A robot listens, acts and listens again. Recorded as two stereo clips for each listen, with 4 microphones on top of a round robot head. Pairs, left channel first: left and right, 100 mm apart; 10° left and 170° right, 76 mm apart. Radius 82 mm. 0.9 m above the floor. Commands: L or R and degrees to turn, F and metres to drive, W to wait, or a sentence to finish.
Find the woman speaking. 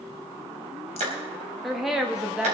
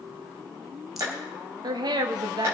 R170
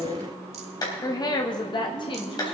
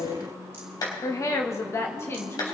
L60
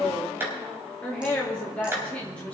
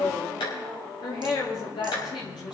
L15
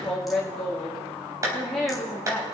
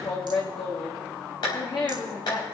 Facing the woman speaking, 2 to 4 m away.